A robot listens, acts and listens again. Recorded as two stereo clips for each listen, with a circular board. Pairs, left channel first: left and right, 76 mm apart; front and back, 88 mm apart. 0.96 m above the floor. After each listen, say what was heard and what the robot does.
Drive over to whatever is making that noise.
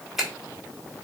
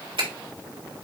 The finger snap: 175° right. Turn 175° right.
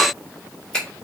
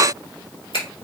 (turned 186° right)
The finger snap is now 10° left. Turn 10° left.
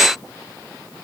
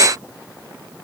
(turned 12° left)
Keep listening.
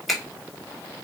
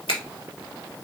Drive 1.0 m forward.
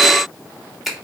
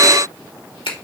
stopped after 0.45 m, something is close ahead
Blocked. The finger snap is further on, straight ahead.